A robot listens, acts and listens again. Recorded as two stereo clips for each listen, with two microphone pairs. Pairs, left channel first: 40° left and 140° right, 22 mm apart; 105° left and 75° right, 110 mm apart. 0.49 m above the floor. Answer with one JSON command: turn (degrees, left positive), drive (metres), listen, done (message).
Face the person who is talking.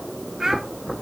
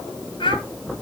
{"turn": 140}
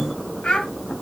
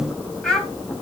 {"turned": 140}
{"turn": 20}
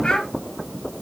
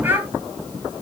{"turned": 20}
{"done": "Facing the child speaking, 2 to 4 m away."}